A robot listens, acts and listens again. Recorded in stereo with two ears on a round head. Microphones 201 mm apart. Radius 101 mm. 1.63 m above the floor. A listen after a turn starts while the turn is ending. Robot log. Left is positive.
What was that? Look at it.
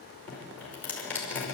cmd yaw +30
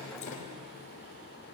note: So it is at 145° left.
cmd yaw +145
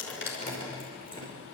note: The dripping is now 20° left.
cmd yaw +20
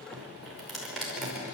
end: Facing the dripping, over 4 m away.